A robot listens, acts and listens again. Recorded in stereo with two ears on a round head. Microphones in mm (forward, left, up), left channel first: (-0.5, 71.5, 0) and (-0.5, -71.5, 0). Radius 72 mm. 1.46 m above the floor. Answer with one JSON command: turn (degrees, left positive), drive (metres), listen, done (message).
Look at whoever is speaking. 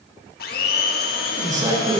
{"turn": -25}
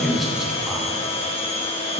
{"turn": -30}
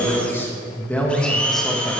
{"done": "Found it: a man speaking, straight ahead."}